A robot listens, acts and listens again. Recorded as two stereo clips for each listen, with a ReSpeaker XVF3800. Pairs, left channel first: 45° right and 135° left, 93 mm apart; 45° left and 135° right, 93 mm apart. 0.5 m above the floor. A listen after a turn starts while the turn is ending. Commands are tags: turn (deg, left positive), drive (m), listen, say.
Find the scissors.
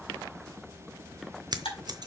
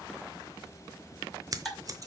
<turn deg="175"/>
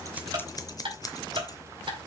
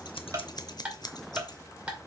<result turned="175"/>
<say>Facing the scissors, under 1 m away.</say>